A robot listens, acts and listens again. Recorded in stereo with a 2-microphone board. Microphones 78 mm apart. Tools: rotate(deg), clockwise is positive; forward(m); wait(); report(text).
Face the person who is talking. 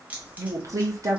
rotate(45)
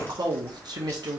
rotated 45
rotate(85)
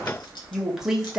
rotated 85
report("Found it: a woman speaking, straight ahead.")